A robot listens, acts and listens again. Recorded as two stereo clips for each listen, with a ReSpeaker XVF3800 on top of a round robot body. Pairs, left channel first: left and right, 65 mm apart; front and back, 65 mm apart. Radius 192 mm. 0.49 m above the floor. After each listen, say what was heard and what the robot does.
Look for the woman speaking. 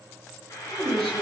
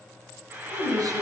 The woman speaking: 165° left. Turn 165° left.
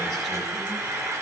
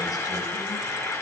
Keep listening.
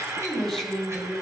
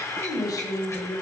Found it: a woman speaking, straight ahead, over 4 m away.